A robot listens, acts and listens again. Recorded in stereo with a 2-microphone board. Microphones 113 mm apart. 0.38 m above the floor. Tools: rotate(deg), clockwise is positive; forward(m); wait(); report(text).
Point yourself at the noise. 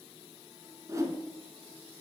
rotate(30)
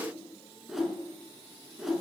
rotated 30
report("Facing the whoosh, 1 to 2 m away.")